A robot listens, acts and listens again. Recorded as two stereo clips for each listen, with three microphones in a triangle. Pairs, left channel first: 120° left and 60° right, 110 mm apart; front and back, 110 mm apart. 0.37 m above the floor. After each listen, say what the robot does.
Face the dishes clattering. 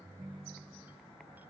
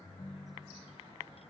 Keep listening.
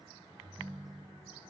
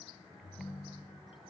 Keep listening.
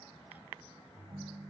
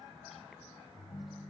I can't make out dishes clattering to turn to.